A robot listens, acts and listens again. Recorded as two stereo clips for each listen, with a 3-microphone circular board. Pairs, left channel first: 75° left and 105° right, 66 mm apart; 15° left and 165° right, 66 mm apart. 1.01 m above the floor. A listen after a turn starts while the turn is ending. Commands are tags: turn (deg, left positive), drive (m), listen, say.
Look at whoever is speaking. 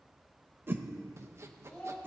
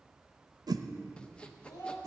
<say>Found it: a child speaking, straight ahead, 2 to 4 m away.</say>